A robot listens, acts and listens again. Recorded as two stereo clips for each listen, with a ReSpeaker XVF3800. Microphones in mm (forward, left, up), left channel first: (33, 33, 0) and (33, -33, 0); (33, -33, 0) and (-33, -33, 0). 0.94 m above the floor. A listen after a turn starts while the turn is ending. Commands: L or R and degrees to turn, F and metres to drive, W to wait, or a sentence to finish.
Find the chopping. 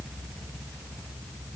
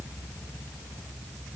W
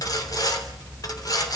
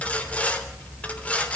W
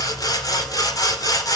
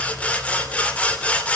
I can't make out chopping, only sawing.